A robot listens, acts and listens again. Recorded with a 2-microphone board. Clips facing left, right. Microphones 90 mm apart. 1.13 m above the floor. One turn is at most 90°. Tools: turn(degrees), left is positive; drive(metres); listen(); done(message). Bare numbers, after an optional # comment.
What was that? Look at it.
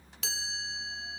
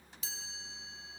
# The chime: about 70° left or 110° left.
turn(70)
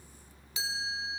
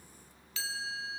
# So it is at 20° left.
turn(20)
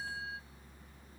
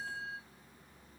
done("Found it: a chime, straight ahead.")